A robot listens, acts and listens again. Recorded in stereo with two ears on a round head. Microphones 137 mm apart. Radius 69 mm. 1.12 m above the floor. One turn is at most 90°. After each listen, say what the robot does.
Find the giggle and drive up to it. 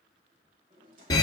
Keep listening.
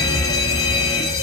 Keep listening.
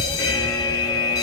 I can't make out a giggle, only a fire alarm and a drawer.